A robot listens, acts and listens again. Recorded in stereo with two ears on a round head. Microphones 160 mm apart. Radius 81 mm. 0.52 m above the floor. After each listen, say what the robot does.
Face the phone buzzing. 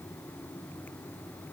Keep listening.
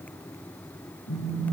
Turn 90° left.
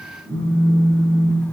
Facing the phone buzzing.